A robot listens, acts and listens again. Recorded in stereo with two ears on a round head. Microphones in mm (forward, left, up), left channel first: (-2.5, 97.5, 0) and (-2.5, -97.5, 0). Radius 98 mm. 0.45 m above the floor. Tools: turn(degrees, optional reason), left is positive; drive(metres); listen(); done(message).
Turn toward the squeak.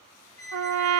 turn(degrees=30)
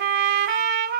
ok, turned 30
listen()
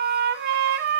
listen()
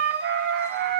done("I heard a squeak, but can't make it out now. It was about 15° right or 135° left.")